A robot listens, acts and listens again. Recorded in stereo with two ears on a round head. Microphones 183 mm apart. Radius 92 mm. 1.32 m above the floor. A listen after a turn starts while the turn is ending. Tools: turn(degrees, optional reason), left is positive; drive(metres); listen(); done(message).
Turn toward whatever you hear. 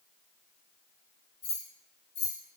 turn(degrees=55, reason="The keys jangling: about 55° left or 125° left.")
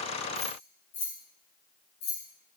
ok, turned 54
turn(degrees=50, reason="So it is at 50° left.")
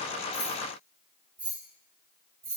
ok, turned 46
turn(degrees=-15, reason="The keys jangling is now 15° right.")
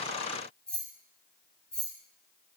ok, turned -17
done("Facing the keys jangling, 2 to 4 m away.")